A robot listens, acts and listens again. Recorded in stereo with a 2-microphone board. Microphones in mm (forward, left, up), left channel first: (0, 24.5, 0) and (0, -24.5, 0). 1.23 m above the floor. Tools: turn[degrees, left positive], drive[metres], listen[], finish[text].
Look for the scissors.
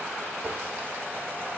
Action: listen[]
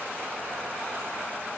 Action: listen[]
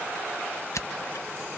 Action: turn[90]
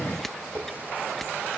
Action: listen[]
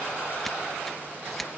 Action: listen[]
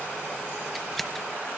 Action: finish[Facing the scissors.]